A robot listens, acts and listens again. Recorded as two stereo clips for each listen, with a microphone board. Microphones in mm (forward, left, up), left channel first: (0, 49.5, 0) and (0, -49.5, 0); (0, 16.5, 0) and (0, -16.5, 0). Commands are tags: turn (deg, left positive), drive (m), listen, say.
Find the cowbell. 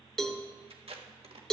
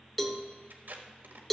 <turn deg="30"/>
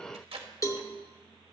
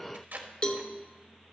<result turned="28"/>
<turn deg="150"/>
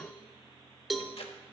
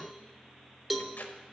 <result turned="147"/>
<say>Found it: a cowbell, straight ahead.</say>